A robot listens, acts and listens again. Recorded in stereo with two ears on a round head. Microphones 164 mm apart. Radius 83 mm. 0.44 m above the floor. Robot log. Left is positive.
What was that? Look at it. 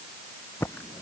cmd yaw +30
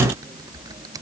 note: So it is at 20° right.
cmd yaw -20
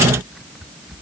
end: Facing the typing on a keyboard.